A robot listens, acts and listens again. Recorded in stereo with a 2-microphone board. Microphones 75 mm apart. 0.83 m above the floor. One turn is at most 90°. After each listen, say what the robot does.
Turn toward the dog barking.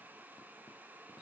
Keep listening.
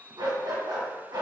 Turn 90° right.
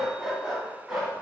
Turn 10° right.
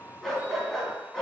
Facing the dog barking, 2 to 4 m away.